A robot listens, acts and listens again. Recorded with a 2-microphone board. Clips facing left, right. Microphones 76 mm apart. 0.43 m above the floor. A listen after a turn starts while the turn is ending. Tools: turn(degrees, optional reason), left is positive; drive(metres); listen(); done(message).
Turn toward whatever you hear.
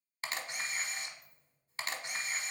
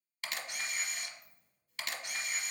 turn(degrees=35, reason="The camera shutter: about 35° left or 145° left.")
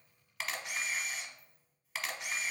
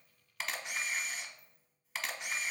done("Found it: a camera shutter, straight ahead.")